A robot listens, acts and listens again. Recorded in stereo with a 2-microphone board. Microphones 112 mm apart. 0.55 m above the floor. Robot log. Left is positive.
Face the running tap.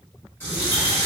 note: The running tap: about 20° left or 160° left.
cmd yaw +20
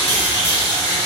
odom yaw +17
note: So it is at 145° left.
cmd yaw +145
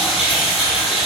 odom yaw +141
end: Facing the running tap.